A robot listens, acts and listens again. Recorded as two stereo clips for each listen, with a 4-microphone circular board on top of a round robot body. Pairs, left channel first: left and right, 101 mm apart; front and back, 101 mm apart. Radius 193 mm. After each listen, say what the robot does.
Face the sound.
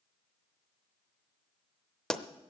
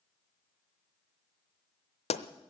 Facing the pop, under 1 m away.